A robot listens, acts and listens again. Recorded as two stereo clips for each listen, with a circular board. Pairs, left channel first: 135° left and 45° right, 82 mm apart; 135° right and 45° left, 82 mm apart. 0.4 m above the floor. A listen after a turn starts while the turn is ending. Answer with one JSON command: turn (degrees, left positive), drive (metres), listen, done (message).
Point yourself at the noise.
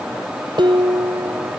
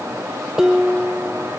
{"turn": -40}
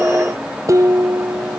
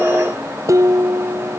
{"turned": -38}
{"done": "Facing the dishes clattering."}